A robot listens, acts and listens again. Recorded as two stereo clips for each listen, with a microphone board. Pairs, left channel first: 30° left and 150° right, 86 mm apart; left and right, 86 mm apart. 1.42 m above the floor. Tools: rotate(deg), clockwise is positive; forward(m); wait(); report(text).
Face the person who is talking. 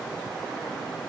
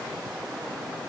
wait()
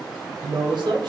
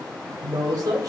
rotate(135)
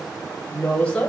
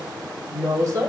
rotate(45)
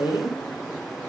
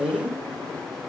report("Facing the woman speaking, 1 to 2 m away.")